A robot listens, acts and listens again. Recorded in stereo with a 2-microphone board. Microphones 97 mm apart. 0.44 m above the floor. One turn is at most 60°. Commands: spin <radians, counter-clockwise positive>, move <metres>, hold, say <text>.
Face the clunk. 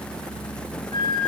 hold
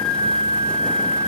hold
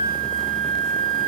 say I can't make out a clunk, only a flute.